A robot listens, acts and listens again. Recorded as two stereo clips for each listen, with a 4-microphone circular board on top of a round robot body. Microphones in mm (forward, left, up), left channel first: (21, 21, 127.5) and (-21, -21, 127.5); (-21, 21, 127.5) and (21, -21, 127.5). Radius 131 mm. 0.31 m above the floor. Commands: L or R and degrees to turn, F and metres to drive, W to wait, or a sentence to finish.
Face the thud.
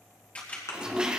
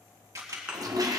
L25
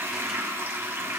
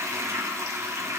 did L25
Facing where the thud came from. I can't hear it now.